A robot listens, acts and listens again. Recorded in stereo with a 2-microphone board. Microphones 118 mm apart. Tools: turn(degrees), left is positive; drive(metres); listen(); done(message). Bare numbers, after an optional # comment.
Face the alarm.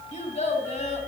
listen()
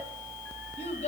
listen()
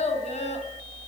done("I can't make out an alarm to turn to.")